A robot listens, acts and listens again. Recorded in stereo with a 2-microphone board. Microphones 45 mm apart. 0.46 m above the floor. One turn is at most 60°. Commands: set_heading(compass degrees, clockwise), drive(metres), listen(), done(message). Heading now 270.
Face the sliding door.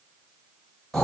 listen()
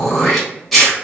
listen()
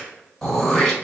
done("I can't make out a sliding door, only throat clearing.")